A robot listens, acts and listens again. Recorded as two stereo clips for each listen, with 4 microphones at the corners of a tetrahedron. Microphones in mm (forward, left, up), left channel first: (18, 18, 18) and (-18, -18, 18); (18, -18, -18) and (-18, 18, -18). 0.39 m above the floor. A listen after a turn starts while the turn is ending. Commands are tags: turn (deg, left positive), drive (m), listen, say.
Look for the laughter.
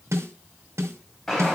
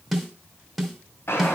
<listen/>
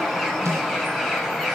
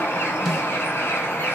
<listen/>
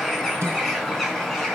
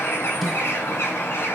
<say>I can't make out laughter to turn to.</say>